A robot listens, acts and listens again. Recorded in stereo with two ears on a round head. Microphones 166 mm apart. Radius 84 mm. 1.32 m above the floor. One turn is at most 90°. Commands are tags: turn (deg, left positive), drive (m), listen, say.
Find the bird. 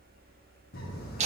<turn deg="50"/>
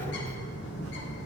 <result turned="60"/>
<turn deg="65"/>
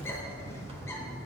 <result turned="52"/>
<turn deg="15"/>
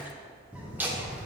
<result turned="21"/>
<say>Facing the bird, under 1 m away.</say>